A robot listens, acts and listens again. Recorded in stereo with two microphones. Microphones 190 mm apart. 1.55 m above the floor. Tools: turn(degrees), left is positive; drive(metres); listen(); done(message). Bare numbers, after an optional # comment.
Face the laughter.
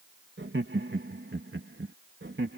turn(-90)
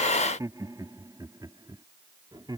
# So it is at 20° right.
turn(-20)
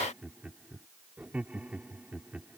done("Facing the laughter.")